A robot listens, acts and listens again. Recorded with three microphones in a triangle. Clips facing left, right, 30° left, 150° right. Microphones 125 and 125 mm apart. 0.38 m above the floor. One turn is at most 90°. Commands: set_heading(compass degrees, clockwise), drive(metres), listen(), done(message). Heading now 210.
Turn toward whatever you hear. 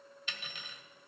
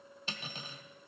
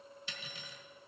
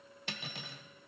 set_heading(300)
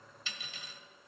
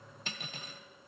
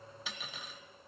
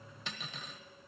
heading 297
set_heading(352)
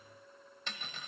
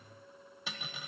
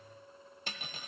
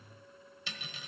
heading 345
done("Found it: cutlery clinking, straight ahead.")